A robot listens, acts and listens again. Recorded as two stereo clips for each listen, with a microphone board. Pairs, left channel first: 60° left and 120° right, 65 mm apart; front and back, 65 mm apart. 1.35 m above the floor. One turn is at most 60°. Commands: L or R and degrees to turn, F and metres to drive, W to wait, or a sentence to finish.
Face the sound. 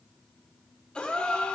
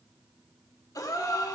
R15
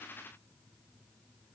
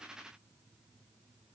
I heard a gasp from this way, but can't make it out now.